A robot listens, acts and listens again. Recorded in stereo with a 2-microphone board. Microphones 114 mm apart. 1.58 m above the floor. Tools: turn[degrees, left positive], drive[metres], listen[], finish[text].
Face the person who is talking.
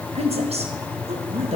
Thought: The woman speaking: about 70° right or 110° right.
Action: turn[-70]
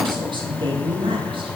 Thought: So it is at 55° right.
Action: turn[-55]
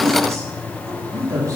Thought: The woman speaking is now 35° right.
Action: turn[-35]
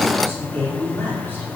Thought: The woman speaking is now 20° left.
Action: turn[20]
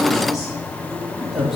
Action: finish[Facing the woman speaking, 2 to 4 m away.]